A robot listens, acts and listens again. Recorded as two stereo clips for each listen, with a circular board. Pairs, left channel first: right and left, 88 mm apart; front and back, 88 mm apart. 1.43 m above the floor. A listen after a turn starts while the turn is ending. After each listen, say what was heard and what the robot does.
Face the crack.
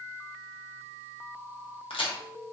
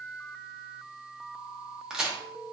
The crack: 100° right. Turn 100° right.
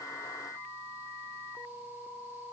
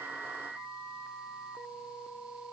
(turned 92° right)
I heard a crack from this way, but can't make it out now.